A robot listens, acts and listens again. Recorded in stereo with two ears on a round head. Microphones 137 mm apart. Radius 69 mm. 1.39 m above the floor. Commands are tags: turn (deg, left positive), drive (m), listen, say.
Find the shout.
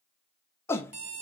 <turn deg="15"/>
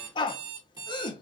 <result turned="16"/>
<turn deg="150"/>
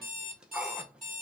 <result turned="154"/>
<say>Facing the shout.</say>